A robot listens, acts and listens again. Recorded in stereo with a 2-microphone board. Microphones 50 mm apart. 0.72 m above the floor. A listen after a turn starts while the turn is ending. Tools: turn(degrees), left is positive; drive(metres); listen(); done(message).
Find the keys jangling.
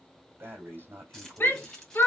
turn(degrees=30)
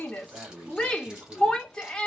listen()
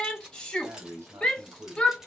turn(degrees=-15)
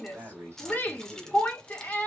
turn(degrees=10)
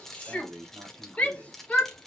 done("Facing the keys jangling.")